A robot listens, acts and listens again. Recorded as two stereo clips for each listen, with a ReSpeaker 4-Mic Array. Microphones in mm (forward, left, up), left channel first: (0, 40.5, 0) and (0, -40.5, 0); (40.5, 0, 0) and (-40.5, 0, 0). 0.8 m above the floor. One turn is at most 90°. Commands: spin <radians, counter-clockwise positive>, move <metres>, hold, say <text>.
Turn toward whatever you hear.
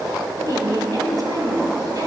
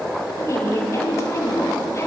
spin -0.87
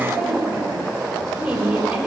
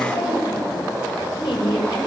spin -0.26
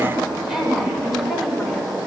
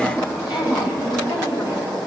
say Facing the woman speaking, 2 to 4 m away.